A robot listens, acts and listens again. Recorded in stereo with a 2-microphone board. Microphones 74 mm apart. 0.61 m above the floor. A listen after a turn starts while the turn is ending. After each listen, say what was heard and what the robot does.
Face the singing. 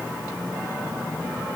Keep listening.
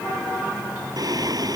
The singing: about 60° right or 120° right. Turn 60° right.
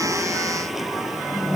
Found it: singing, straight ahead.